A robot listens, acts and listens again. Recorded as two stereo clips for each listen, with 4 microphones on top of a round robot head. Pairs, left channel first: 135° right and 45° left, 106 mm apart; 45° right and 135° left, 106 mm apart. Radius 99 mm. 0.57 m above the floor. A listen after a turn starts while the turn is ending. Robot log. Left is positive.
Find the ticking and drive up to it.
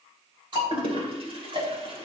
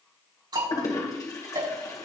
note: The ticking: 90° left.
cmd yaw +90
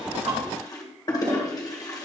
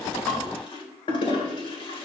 cmd idle
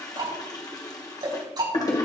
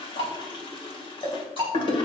cmd fwd 1.0
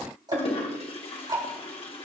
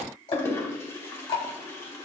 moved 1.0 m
cmd fwd 1.0
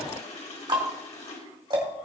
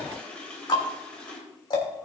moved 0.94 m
cmd fwd 1.0
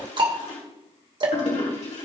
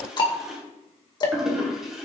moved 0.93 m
cmd fwd 1.0
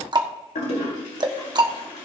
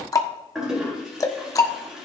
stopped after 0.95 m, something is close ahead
end: Arrived at the ticking, straight ahead.